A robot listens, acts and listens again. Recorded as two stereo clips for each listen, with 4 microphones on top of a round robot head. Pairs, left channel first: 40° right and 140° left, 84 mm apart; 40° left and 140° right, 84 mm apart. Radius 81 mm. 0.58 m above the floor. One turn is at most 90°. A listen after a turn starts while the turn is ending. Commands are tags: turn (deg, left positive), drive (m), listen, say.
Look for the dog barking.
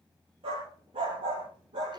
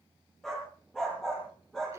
<turn deg="90"/>
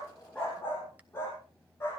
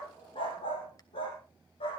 <turn deg="25"/>
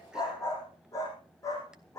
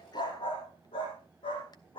<turn deg="15"/>
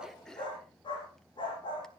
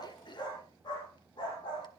<say>Facing the dog barking, over 4 m away.</say>